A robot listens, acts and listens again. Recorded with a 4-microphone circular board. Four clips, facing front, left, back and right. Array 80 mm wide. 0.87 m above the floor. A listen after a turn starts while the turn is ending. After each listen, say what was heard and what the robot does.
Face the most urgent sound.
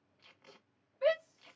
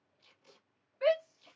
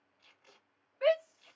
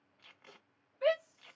The shout: 155° left. Turn 155° left.
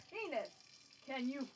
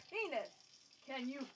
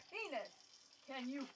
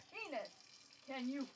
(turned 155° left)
The shout is now 25° left. Turn 25° left.
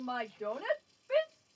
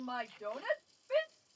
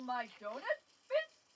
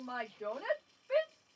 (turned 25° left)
The shout is now 15° right. Turn 15° right.
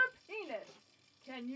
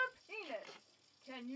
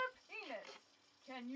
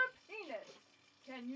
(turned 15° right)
Facing the shout, 2 to 4 m away.